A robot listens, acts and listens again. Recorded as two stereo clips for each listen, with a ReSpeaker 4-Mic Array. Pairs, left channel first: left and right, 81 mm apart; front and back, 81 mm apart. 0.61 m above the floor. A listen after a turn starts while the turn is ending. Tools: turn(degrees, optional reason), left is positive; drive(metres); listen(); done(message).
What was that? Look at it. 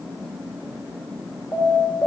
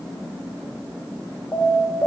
turn(degrees=65, reason="The alarm: 65° left.")
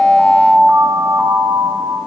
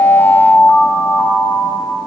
turn(degrees=-20, reason="The alarm is now 20° right.")
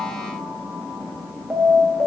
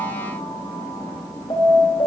done("Found it: an alarm, straight ahead.")